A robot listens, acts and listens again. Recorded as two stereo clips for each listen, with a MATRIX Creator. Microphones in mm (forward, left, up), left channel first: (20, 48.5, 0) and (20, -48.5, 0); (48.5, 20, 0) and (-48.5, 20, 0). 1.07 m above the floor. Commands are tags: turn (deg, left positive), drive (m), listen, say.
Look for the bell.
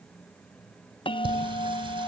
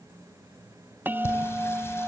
<turn deg="110"/>
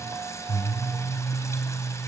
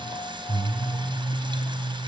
<listen/>
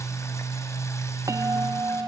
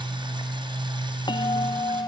<turn deg="-35"/>
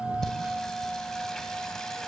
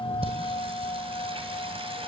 <turn deg="-10"/>
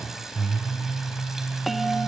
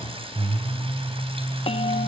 <say>Found it: a bell, straight ahead.</say>